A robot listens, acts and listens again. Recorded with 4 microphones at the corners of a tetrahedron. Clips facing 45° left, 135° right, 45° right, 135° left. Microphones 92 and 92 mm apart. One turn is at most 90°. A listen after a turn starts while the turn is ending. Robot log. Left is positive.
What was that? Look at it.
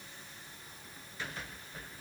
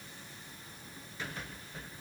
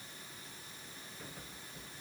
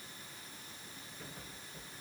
cmd idle
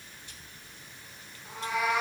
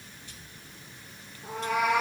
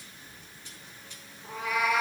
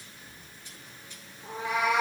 note: The cat meowing: 160° right.
cmd yaw -90
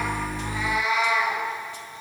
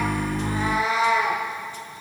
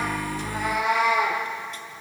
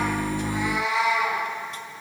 note: The cat meowing is now 75° right.
cmd yaw -75
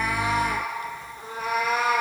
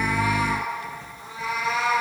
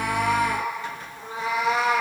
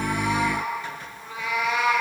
note: The cat meowing is now 10° left.
cmd yaw +10
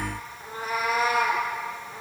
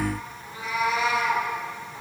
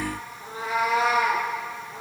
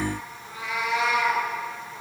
end: Facing the cat meowing.